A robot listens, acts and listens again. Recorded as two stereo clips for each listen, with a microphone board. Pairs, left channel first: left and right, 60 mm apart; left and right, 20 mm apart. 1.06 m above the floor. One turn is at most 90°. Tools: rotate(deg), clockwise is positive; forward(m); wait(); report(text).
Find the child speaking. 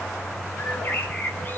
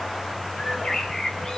wait()
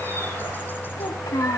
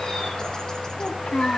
rotate(-90)
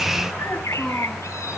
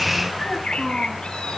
report("Facing the child speaking.")